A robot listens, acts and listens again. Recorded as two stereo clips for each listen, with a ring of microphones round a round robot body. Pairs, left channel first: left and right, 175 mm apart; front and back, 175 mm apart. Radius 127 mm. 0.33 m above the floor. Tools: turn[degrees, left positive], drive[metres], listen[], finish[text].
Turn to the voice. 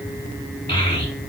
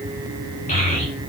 Thought: The child speaking: 30° left.
Action: turn[30]
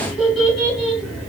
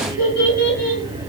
Action: finish[Facing the child speaking.]